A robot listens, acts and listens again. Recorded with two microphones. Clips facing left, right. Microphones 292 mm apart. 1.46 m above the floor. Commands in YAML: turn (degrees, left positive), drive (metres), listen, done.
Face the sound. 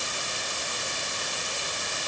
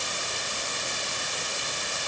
listen: true
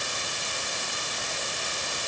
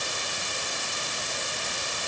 listen: true
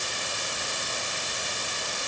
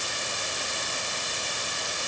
done: "I can't make out anything to turn to."